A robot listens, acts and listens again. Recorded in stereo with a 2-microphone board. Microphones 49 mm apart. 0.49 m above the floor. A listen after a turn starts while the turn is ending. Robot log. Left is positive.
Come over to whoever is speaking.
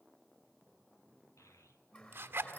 cmd yaw +90
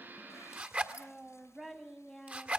cmd fwd 1.0
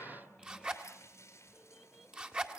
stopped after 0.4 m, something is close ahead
cmd idle
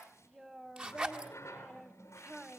end: Blocked. The child speaking is further on, straight ahead.